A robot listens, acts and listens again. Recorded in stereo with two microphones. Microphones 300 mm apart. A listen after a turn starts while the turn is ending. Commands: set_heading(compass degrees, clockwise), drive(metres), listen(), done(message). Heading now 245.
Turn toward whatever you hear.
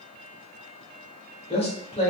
set_heading(225)
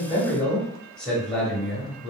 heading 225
done("Facing the man speaking.")